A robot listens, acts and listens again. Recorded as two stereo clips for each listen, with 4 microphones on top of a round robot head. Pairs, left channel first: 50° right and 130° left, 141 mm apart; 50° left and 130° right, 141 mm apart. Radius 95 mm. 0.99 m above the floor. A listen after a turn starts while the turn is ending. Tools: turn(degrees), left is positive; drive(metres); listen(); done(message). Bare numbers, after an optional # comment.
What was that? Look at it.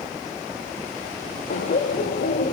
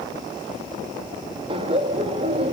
# The laughter: 85° right.
turn(-85)
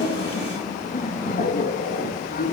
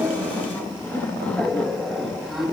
# The laughter is now 40° right.
turn(-40)
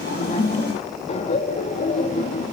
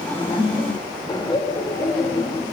# The laughter is now 10° right.
turn(-10)
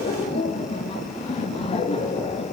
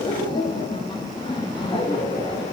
done("Facing the laughter.")